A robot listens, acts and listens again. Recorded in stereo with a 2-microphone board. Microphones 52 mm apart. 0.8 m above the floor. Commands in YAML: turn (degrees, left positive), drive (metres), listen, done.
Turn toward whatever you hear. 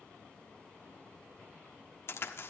turn: 55
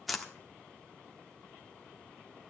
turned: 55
done: "Found it: a crack, straight ahead."